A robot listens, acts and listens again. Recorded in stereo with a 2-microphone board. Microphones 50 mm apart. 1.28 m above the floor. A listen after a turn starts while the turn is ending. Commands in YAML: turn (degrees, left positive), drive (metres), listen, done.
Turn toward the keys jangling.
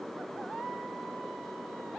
listen: true
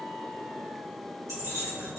turn: -90
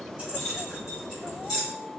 turn: -10
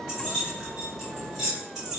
done: "Facing the keys jangling, 2 to 4 m away."